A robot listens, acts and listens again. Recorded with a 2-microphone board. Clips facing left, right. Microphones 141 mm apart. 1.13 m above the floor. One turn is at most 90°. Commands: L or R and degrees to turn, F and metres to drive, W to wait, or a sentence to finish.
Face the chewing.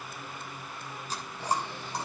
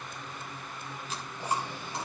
L35
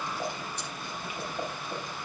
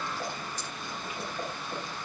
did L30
W
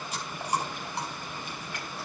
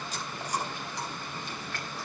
L90
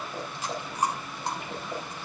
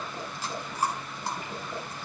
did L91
L25
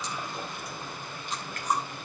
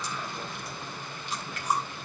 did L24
Facing the chewing, over 4 m away.